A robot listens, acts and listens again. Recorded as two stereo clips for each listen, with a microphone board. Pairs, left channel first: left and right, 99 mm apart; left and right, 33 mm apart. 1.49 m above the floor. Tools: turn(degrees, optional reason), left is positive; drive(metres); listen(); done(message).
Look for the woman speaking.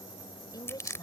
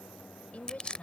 turn(degrees=40, reason="The woman speaking: about 40° left or 140° left.")
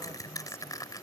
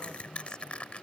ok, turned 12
listen()
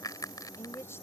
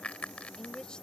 turn(degrees=25, reason="The woman speaking: about 25° left or 155° left.")
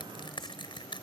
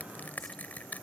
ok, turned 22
listen()
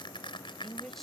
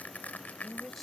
done("Facing the woman speaking.")